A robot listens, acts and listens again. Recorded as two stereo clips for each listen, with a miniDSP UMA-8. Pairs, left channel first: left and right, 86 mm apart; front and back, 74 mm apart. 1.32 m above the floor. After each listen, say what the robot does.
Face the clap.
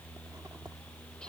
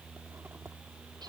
Keep listening.
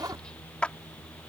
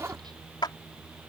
Turn 15° left.
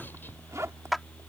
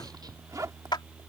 Facing the clap.